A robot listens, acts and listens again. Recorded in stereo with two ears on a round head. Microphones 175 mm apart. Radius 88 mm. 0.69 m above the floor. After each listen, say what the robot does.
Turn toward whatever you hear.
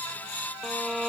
Turn 30° left.
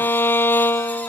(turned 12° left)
Turn 170° left.
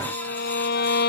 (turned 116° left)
Turn 55° left.
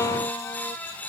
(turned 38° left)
Turn 15° left.
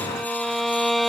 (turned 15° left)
Facing the violin.